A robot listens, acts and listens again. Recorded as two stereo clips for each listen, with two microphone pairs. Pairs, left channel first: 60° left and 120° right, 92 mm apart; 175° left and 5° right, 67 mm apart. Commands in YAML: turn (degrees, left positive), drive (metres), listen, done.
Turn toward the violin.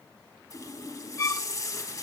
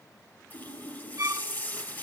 turn: 15
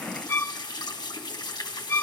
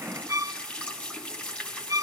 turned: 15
done: "Found it: a violin, straight ahead."